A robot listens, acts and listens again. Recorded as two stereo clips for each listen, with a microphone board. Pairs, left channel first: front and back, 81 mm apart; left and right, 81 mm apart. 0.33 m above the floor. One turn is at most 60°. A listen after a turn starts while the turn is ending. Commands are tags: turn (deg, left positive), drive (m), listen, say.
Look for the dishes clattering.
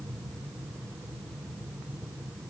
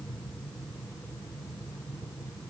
<listen/>
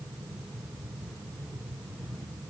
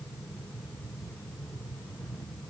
<listen/>
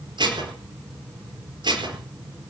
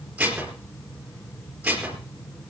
<turn deg="-60"/>
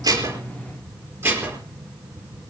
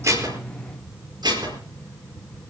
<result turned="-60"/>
<turn deg="-60"/>
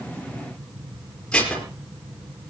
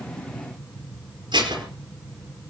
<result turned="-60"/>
<turn deg="-60"/>
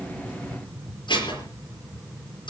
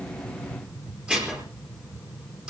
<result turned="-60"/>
<turn deg="-15"/>
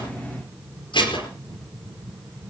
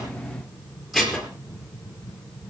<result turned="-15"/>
<say>Facing the dishes clattering.</say>